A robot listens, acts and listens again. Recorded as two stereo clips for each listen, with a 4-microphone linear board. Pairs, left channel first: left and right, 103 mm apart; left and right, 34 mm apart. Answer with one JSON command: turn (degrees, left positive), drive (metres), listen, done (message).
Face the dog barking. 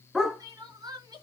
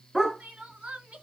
{"turn": -30}
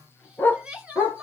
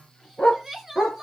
{"turn": 15}
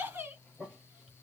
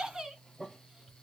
{"listen": true}
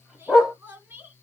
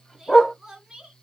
{"done": "Facing the dog barking, 2 to 4 m away."}